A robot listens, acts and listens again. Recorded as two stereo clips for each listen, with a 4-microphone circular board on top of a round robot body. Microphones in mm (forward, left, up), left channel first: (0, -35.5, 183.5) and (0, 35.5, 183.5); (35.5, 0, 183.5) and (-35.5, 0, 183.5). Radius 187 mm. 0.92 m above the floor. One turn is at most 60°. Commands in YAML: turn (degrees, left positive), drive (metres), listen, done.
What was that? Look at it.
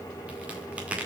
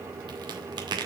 turn: 60
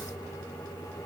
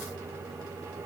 turn: 60
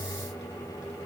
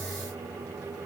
turn: 45
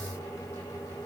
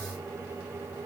done: "I heard a crack from this way, but can't make it out now."